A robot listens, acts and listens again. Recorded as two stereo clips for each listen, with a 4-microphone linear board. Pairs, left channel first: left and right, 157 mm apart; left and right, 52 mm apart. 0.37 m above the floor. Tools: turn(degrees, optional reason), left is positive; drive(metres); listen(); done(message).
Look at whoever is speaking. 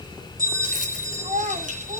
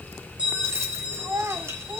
turn(degrees=-55, reason="The child speaking: about 55° right or 125° right.")
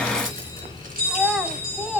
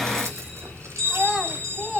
done("Found it: a child speaking, straight ahead.")